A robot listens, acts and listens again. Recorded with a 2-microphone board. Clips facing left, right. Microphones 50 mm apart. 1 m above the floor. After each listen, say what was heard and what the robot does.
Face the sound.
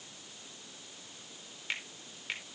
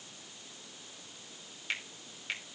Turn 30° left.
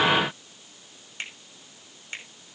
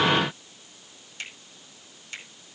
So it is at 150° left. Turn 150° left.
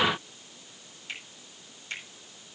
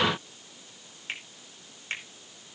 The finger snap is now 40° right. Turn 40° right.
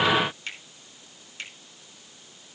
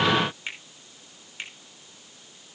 The finger snap is now 20° right. Turn 20° right.
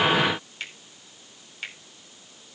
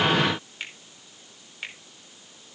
Facing the finger snap.